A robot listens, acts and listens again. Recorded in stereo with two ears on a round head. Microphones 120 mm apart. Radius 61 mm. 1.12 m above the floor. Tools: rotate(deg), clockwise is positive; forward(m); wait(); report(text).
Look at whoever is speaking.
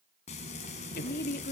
rotate(-90)
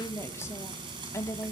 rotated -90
rotate(-20)
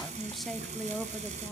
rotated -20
report("Facing the woman speaking, 1 to 2 m away.")